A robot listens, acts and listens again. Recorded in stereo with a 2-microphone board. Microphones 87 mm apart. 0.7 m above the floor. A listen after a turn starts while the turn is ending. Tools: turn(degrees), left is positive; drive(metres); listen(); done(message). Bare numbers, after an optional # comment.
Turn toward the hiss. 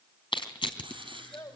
turn(-90)
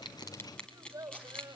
# So it is at 15° left.
turn(15)
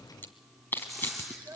done("Facing the hiss.")